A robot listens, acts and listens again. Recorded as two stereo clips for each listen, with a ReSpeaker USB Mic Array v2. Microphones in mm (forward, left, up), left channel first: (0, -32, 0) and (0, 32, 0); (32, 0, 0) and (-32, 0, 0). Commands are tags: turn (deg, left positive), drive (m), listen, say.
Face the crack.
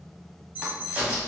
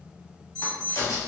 <turn deg="20"/>
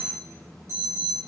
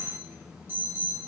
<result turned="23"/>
<say>Facing where the crack came from. I can't hear it now.</say>